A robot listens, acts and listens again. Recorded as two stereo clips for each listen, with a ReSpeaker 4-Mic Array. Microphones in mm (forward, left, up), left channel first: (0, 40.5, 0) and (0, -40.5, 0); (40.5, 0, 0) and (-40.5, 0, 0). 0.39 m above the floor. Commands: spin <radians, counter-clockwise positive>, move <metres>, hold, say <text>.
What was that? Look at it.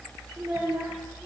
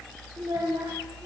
spin -2.71
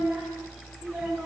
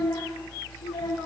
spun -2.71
spin -0.26
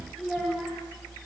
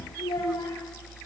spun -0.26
say Facing the child speaking.